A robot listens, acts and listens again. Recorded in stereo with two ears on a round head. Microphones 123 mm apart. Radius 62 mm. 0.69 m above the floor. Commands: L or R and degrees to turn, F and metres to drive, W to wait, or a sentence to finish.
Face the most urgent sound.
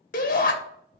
L65
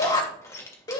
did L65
L35
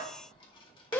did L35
L20
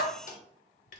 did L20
W
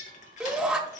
Facing the shout.